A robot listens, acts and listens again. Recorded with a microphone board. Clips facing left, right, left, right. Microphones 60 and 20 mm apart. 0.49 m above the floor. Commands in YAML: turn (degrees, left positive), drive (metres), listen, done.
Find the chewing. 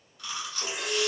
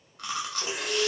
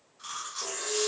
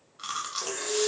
turn: -60
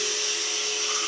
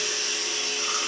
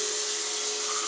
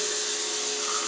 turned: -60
listen: true
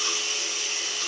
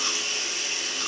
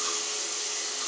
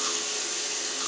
listen: true
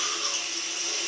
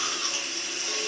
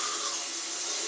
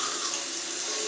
done: "I heard chewing, but can't make it out now. It was about straight ahead or 60° right."